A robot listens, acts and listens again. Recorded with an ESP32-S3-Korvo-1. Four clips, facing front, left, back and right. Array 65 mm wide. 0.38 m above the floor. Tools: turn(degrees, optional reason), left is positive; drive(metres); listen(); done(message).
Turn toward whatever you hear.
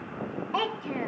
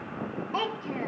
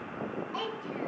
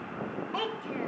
turn(degrees=10, reason="The child speaking: 10° left.")
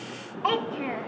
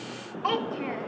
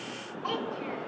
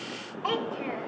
done("Facing the child speaking.")